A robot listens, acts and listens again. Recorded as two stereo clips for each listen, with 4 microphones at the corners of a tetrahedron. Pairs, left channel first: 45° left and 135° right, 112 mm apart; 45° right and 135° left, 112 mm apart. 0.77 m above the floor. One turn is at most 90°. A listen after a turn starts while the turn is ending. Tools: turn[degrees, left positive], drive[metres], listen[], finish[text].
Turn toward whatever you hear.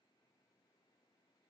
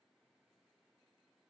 Action: listen[]
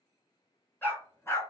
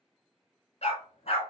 Thought: The dog barking: 20° right.
Action: turn[-20]
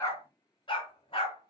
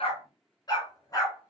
Thought: The dog barking is now 10° left.
Action: turn[10]
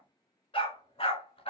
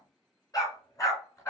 Thought: The dog barking is now 20° left.
Action: turn[20]
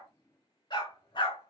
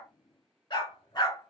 Action: finish[Found it: a dog barking, straight ahead, 2 to 4 m away.]